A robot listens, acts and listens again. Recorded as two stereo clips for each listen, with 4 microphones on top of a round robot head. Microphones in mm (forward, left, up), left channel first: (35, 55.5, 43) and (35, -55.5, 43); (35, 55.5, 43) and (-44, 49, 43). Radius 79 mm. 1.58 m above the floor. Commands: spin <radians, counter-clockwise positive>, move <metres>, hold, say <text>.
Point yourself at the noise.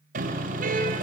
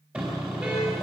spin -1.66
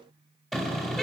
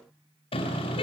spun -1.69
say Facing the car horn.